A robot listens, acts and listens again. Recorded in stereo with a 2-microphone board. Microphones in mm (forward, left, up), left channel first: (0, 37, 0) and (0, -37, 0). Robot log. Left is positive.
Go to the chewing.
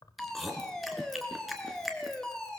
cmd yaw +30
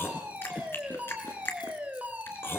note: So it is at 150° left.
cmd yaw +150
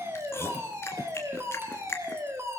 note: The chewing is now 35° left.
cmd yaw +35
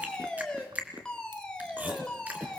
note: The chewing is now 20° right.
cmd yaw -20
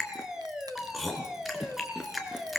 cmd fwd 1.0
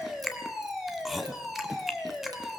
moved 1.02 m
cmd fwd 1.0
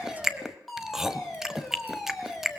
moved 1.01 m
cmd fwd 1.0
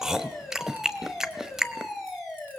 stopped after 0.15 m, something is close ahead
end: I am next to the chewing.